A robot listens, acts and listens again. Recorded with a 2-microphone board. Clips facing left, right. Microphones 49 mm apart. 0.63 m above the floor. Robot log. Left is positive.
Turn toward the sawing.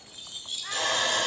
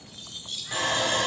note: The sawing: about 20° right or 160° right.
cmd yaw -20
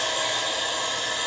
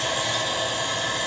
note: So it is at 140° right.
cmd yaw -140
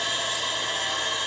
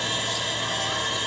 end: Found it: sawing, straight ahead.